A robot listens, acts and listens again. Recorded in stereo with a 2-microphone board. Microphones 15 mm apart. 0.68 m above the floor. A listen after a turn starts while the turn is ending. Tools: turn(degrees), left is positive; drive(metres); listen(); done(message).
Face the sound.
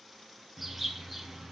turn(degrees=-30)
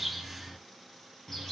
turn(degrees=25)
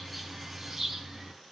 turn(degrees=-20)
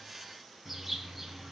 done("Found it: a bird, straight ahead, over 4 m away.")